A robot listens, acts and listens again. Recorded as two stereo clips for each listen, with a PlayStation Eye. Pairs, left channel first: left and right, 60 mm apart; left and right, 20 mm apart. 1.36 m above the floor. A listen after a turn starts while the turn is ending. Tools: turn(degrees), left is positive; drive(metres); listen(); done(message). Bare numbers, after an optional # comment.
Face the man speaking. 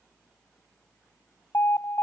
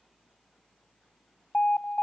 listen()
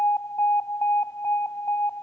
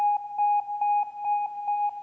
listen()
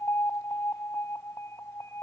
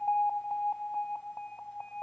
done("I can't make out a man speaking, only an alarm.")